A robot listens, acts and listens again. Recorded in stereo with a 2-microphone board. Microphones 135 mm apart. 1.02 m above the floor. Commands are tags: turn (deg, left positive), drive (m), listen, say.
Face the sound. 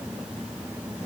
<listen/>
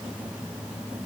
<listen/>
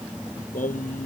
<turn deg="90"/>
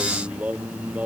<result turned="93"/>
<turn deg="-10"/>
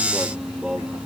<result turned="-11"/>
<say>Found it: singing, straight ahead.</say>